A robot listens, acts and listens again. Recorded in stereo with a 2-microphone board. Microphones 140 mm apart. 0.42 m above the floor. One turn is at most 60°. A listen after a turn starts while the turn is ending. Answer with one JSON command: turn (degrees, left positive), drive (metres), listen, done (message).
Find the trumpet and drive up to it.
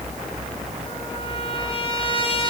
{"turn": 40}
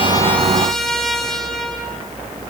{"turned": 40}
{"drive": 1.0}
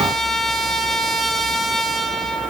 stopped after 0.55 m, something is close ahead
{"done": "Blocked. The trumpet is further on, straight ahead."}